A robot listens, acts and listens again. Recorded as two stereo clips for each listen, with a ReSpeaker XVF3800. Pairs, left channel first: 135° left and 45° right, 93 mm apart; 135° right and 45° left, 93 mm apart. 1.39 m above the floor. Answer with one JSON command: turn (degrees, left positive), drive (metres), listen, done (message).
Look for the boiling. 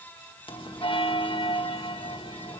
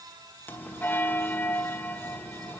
{"listen": true}
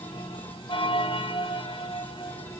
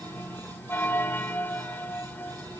{"listen": true}
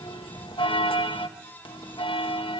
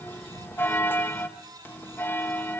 {"done": "I can't make out boiling, only a bell."}